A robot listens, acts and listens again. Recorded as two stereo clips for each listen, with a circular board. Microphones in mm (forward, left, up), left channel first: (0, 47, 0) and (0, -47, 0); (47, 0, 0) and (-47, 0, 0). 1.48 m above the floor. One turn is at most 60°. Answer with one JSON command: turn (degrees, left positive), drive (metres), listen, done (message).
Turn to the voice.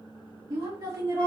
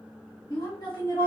{"turn": -45}
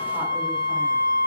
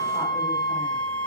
{"listen": true}
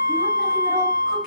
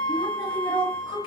{"listen": true}
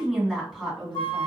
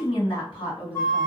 {"done": "Facing the woman speaking, 1 to 2 m away."}